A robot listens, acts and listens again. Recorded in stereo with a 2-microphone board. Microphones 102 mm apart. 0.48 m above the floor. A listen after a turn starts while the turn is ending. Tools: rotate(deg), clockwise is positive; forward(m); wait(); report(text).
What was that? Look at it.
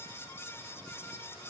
wait()
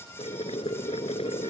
rotate(-90)
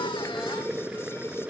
rotate(10)
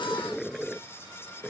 report("Found it: boiling, straight ahead.")